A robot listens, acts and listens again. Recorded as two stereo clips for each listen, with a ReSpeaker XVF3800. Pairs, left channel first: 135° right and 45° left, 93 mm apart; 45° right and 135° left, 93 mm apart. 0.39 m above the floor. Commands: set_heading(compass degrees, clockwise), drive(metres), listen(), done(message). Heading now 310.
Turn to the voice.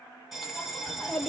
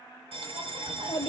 set_heading(10)
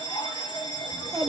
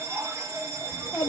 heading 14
done("Found it: a child speaking, straight ahead.")